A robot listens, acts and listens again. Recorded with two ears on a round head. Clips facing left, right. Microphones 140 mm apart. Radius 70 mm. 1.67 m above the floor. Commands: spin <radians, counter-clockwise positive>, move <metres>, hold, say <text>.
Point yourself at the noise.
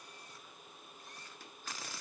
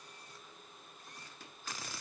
hold
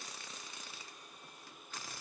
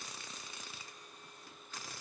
hold
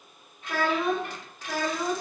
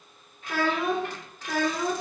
spin 0.52
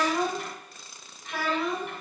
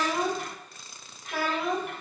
spin 0.52
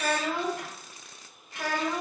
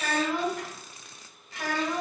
spin 2.79
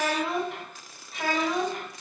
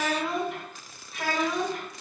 say Facing the child speaking.